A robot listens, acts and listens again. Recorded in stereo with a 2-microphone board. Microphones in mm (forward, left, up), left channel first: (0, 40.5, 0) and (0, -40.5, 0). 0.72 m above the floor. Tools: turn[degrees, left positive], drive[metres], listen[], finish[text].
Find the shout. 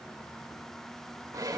Action: listen[]
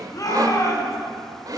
Thought: The shout: about 45° left or 135° left.
Action: turn[45]
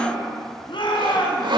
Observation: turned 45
Thought: So it is at 85° left.
Action: turn[85]
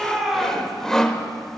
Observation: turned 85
Action: finish[Facing the shout.]